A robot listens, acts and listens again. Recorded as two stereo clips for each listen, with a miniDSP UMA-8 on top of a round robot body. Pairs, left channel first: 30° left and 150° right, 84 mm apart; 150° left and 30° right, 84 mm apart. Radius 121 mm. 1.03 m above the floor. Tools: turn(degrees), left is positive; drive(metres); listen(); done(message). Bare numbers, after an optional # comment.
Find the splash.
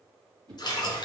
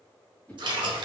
done("Facing the splash.")